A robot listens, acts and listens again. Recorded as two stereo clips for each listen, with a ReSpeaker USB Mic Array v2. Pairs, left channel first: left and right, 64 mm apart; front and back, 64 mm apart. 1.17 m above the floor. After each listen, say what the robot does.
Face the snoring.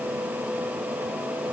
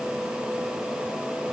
Keep listening.
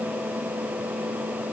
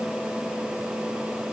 Keep listening.
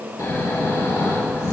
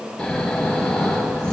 Turn 75° left.
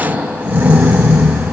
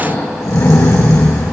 Turn 35° right.
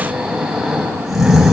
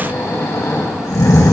Found it: snoring, straight ahead, 2 to 4 m away.